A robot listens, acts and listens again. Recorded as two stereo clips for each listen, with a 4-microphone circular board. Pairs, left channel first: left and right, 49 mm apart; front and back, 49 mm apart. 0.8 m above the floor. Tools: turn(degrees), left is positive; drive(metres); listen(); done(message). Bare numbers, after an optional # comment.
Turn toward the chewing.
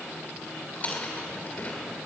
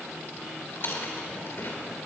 # The chewing: 35° left.
turn(35)
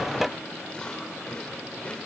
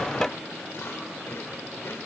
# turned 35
# The chewing is now 25° left.
turn(25)
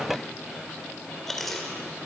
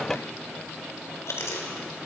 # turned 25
# The chewing is now 10° left.
turn(10)
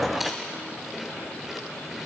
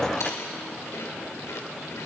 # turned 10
done("Found it: chewing, straight ahead.")